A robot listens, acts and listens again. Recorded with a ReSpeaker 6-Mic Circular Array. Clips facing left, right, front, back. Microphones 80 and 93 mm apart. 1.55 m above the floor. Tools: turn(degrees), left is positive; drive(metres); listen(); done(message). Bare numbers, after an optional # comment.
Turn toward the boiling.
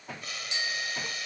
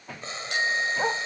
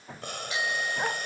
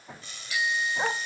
# The boiling: 30° right.
turn(-30)
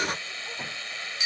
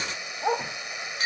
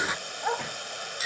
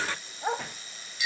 # The boiling is now 20° right.
turn(-20)
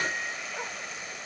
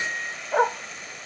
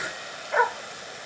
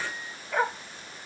done("Facing the boiling.")